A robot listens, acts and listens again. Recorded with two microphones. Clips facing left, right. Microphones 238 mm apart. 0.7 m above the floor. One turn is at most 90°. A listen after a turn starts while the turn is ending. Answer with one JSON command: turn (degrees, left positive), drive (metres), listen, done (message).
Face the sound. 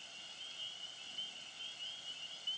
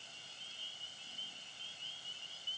{"listen": true}
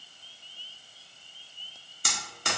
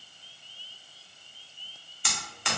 {"turn": 45}
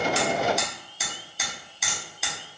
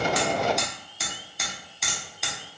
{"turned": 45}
{"done": "Found it: hammering, straight ahead, under 1 m away."}